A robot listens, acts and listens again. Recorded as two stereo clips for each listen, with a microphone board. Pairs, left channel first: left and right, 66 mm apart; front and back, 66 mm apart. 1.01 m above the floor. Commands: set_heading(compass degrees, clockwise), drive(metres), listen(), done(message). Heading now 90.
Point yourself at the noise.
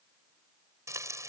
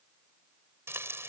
set_heading(220)
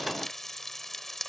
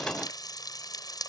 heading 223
done("Found it: frying, straight ahead.")